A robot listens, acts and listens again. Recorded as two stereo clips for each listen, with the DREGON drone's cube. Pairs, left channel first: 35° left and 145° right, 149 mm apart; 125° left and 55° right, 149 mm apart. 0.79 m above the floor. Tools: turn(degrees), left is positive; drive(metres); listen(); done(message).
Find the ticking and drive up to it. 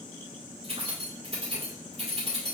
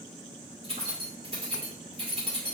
listen()
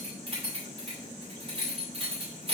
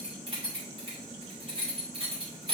listen()
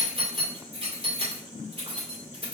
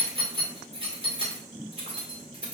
done("I can't make out ticking to turn to.")